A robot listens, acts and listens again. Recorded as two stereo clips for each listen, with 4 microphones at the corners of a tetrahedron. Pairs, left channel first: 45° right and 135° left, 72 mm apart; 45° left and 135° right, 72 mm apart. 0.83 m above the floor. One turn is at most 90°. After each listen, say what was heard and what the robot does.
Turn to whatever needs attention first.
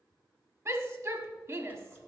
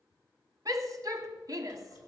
The shout: 175° right. Turn 90° right.
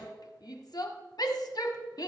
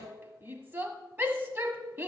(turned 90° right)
The shout is now 75° right. Turn 75° right.
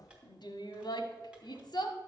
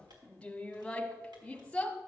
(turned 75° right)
The shout is now 30° right. Turn 30° right.
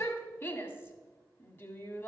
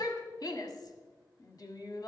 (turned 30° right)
The shout is now 10° left. Turn 10° left.
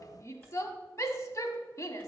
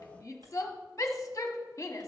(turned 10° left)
Found it: a shout, straight ahead.